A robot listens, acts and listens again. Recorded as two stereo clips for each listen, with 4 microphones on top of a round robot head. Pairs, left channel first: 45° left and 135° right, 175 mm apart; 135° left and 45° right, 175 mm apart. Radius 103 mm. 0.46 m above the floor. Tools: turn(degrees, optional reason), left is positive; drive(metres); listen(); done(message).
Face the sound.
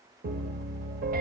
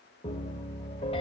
turn(degrees=-170, reason="The piano: 170° right.")
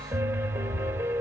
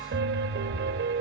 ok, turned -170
turn(degrees=-55, reason="The piano is now 55° right.")
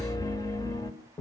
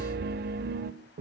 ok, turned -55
turn(degrees=-25, reason="The piano is now 25° right.")
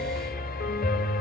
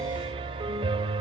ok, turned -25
turn(degrees=15, reason="The piano is now 15° left.")
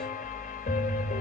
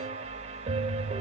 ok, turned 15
done("Facing the piano, 1 to 2 m away.")